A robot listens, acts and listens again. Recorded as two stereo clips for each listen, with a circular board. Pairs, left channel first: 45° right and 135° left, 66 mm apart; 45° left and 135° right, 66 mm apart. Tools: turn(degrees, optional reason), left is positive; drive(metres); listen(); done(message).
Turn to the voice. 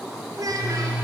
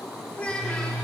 turn(degrees=115, reason="The child speaking: 115° left.")
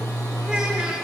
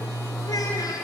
turn(degrees=55, reason="The child speaking is now 55° left.")
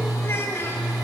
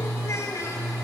done("Found it: a child speaking, straight ahead, 2 to 4 m away.")